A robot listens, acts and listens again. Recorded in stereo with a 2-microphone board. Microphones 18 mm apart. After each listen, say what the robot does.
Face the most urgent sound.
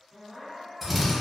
Turn 30° right.
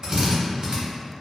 Keep listening.
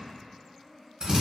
Turn 20° left.
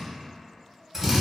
Keep listening.
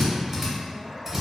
Keep listening.
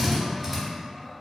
Facing where the crying came from. I can't hear it now.